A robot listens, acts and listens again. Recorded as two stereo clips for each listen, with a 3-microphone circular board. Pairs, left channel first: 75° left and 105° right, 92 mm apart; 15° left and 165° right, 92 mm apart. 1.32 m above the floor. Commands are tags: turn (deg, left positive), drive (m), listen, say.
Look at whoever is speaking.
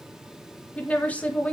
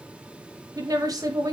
<turn deg="150"/>
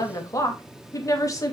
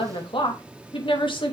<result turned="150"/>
<turn deg="25"/>
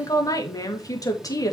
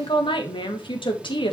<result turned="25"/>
<turn deg="30"/>
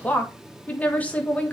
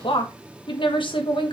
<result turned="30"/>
<say>Facing the woman speaking.</say>